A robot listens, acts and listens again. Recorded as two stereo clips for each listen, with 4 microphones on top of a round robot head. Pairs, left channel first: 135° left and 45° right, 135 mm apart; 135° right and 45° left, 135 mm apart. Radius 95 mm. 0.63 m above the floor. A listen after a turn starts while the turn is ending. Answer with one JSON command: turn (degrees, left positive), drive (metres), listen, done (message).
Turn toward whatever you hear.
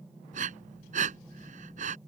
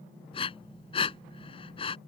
{"turn": -85}
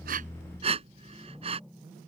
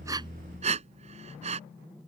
{"done": "Facing the breathing."}